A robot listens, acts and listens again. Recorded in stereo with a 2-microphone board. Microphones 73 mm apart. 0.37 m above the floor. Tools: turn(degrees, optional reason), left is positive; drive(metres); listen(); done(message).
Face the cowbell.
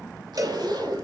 turn(degrees=-50, reason="The cowbell: about 50° right or 130° right.")
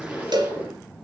turn(degrees=-80, reason="So it is at 80° right.")
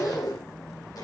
listen()
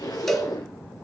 done("Facing the cowbell, 2 to 4 m away.")